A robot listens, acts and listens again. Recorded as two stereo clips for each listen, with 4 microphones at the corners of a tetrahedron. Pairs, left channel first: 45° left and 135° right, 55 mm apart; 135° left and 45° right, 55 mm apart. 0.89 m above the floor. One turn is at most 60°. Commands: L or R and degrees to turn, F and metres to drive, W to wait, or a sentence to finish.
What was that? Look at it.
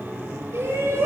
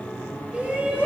R60
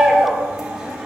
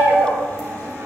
R55
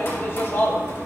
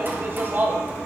Found it: a shout, straight ahead.